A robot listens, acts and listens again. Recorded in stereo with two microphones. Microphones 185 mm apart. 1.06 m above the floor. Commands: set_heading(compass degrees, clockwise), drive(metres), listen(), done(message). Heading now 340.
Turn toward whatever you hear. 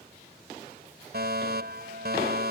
set_heading(45)
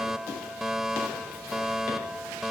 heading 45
done("Facing the fire alarm.")